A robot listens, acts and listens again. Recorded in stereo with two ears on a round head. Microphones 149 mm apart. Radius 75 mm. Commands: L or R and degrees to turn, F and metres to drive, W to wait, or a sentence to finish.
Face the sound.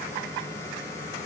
W
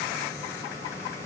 W
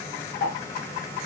L90
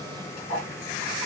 Found it: ticking, straight ahead.